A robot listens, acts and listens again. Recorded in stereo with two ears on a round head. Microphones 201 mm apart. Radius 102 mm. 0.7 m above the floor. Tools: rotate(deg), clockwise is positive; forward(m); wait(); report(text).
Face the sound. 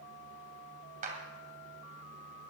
rotate(35)
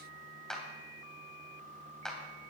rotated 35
report("Facing the clap.")